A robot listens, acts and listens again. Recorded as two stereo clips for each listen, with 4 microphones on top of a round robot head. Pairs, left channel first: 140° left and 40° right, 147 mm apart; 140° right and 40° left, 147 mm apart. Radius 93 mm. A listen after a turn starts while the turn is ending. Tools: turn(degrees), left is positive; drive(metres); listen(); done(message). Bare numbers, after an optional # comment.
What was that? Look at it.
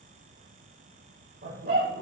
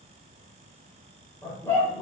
# The dog barking: 65° right.
turn(-65)
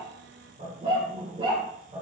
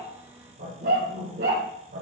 # The dog barking is now 15° left.
turn(15)
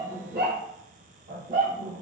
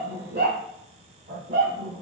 done("Facing the dog barking, over 4 m away.")